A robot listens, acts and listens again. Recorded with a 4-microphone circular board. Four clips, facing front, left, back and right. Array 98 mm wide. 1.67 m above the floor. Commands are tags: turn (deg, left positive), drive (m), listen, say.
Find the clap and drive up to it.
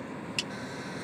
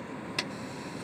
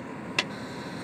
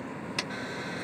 <turn deg="-175"/>
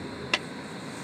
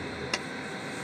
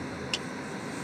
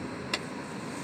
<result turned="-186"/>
<turn deg="10"/>
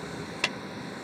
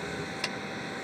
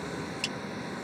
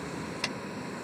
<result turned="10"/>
<drive m="1.0"/>
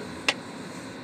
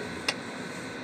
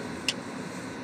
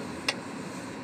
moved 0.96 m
<drive m="1.0"/>
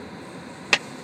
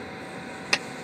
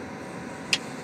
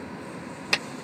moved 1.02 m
<drive m="1.0"/>
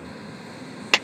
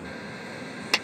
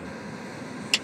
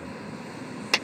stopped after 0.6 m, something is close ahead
<say>I am next to the clap.</say>